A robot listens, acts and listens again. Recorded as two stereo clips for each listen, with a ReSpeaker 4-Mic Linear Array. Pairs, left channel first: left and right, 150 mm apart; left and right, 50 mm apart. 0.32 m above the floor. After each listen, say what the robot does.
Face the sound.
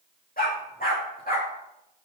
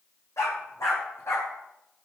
Turn 90° left.
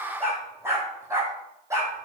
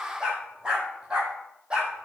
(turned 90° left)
Turn 20° right.
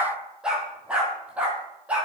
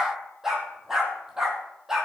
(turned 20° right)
Turn 10° right.
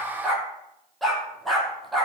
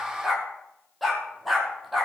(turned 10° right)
Facing the dog barking.